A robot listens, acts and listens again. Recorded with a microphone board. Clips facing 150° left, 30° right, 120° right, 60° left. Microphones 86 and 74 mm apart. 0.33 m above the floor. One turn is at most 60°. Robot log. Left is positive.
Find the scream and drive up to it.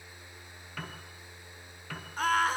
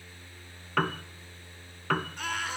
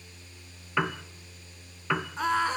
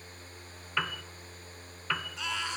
note: The scream: 165° right.
cmd yaw -60
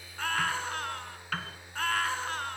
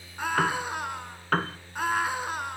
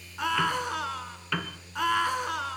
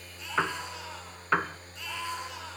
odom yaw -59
note: The scream is now 105° right.
cmd yaw -60
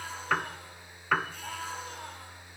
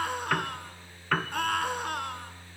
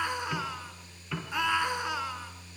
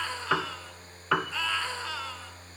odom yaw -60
note: The scream is now 45° right.
cmd yaw -45
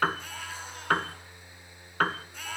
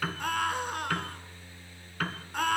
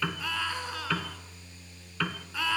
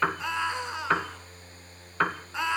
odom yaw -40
cmd fwd 1.0
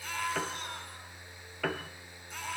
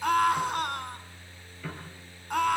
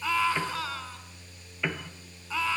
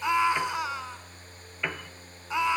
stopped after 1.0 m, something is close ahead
note: The scream is now 10° right.
cmd yaw -10
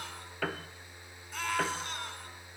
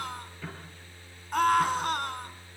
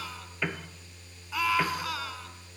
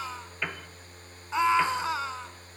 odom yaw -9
end: Something is in my way. I am facing the scream but have not reached it.